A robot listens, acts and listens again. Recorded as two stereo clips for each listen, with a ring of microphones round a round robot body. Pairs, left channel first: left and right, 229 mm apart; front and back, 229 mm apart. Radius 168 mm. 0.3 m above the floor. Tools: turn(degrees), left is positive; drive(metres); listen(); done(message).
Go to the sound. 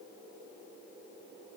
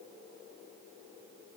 listen()
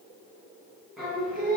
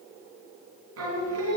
turn(degrees=180)
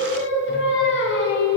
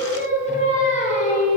turn(degrees=60)
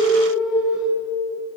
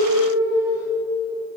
drive(metres=1.0)
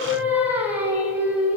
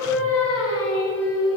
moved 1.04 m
turn(degrees=-10)
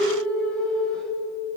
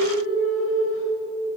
drive(metres=1.0)
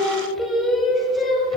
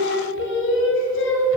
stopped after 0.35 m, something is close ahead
done("Arrived at the singing, straight ahead.")